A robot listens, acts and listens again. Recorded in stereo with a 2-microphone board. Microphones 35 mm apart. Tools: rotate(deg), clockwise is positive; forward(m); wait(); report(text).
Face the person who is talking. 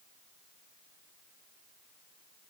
wait()
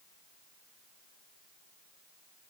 wait()
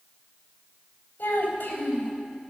rotate(-90)
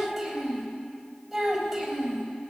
report("Facing the child speaking.")